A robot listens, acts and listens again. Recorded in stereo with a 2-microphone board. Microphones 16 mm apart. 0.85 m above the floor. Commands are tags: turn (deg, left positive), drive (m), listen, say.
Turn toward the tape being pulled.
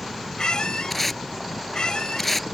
<turn deg="15"/>
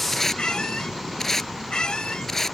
<turn deg="150"/>
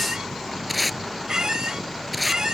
<say>Found it: tape being pulled, straight ahead.</say>